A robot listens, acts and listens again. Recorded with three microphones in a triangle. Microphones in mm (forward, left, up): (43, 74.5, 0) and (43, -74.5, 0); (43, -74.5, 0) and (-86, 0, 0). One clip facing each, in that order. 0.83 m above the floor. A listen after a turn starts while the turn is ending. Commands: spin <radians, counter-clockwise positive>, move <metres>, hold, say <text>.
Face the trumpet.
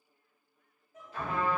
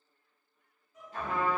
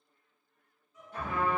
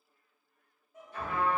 spin -0.79
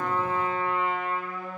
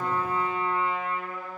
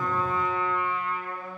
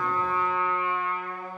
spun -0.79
say Found it: a trumpet, straight ahead, 1 to 2 m away.